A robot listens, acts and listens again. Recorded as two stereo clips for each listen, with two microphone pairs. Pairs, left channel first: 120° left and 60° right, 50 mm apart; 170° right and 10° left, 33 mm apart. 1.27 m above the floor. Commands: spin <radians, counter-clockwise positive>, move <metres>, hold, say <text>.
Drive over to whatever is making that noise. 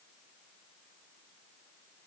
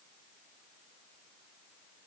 hold
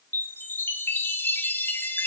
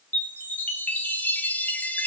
spin 2.88
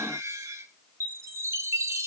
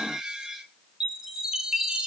spin -1.05
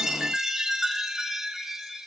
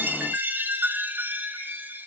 spin 0.35
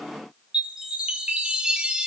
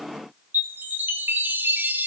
spin 0.17
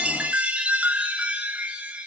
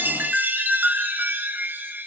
move 1.0
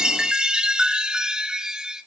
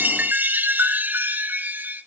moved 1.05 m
spin 0.26
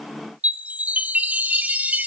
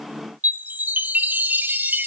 move 1.0
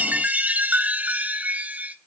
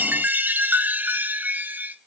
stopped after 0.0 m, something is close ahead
say Arrived at the chime, straight ahead.